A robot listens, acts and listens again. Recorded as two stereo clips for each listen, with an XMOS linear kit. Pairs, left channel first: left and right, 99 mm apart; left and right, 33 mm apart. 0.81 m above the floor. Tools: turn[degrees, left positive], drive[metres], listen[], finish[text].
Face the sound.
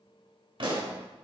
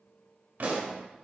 Thought: The pop: about 60° right or 120° right.
Action: turn[-60]
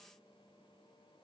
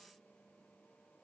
Action: listen[]
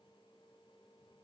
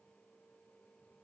Action: finish[I heard a pop, but can't make it out now. It was about straight ahead or 60° right.]